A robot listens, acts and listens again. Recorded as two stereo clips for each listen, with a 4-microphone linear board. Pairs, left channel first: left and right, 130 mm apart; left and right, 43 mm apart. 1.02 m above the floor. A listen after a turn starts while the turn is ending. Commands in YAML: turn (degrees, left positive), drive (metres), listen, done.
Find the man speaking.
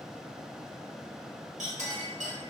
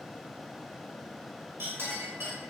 listen: true
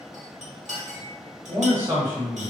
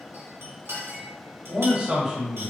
turn: -15
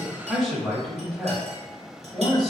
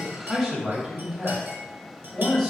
done: "Facing the man speaking, 1 to 2 m away."